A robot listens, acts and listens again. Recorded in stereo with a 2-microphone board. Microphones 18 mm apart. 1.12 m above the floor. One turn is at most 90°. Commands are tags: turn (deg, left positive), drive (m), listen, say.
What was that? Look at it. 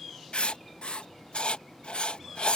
<turn deg="90"/>
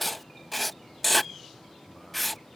<say>Facing the writing.</say>